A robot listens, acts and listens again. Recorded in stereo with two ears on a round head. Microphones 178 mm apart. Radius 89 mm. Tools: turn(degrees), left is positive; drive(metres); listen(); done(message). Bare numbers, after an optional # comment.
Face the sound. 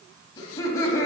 turn(30)
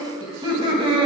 # So it is at 25° right.
turn(-25)
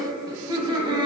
# The laughter is now 25° right.
turn(-25)
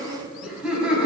done("Found it: laughter, straight ahead.")